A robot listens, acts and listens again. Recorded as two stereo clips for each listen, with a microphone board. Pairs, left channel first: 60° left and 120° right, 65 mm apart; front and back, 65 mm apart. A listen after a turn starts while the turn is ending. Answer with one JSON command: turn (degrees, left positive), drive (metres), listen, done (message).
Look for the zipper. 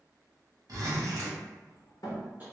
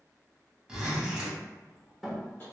{"turn": -105}
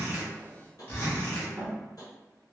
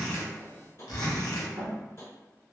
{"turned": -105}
{"done": "Found it: a zipper, straight ahead."}